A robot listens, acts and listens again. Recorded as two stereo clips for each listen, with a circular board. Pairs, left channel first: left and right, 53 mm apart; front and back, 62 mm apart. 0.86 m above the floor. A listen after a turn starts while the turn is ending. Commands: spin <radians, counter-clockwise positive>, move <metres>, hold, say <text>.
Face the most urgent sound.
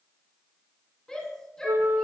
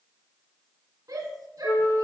spin 2.88
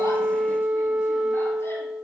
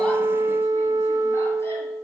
hold
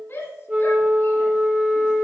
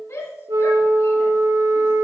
spin 0.70
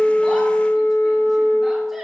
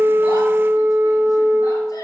hold
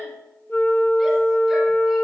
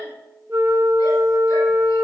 hold
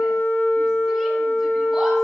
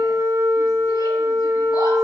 say I heard a shout from this way, but can't make it out now.